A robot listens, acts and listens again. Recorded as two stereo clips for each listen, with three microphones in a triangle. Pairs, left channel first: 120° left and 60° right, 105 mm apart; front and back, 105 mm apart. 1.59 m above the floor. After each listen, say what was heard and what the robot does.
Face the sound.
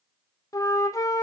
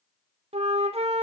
The flute: 175° left. Turn 175° left.
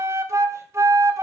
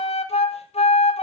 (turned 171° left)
Found it: a flute, straight ahead.